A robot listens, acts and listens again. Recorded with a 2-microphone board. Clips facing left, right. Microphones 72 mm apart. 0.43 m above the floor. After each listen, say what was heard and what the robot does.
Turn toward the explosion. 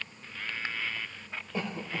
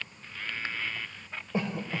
Keep listening.
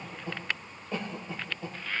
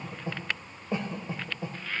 Keep listening.
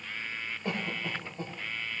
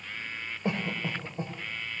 I can't make out an explosion, only a cough.